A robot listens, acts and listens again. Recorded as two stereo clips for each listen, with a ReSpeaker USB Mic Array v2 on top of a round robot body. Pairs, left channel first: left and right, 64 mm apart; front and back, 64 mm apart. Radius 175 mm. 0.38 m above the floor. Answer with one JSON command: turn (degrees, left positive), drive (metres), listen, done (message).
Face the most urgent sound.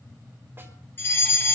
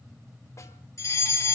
{"turn": 40}
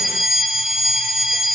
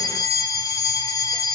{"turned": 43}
{"done": "Found it: a fire alarm, straight ahead, over 4 m away."}